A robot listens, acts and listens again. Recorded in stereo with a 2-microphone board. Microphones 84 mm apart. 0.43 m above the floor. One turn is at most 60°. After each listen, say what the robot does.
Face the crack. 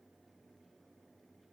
Keep listening.
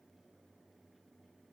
Keep listening.
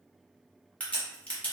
Turn 30° left.
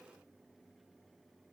Keep listening.
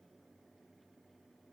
I heard a crack, but can't make it out now. It was about 15° right or 135° left.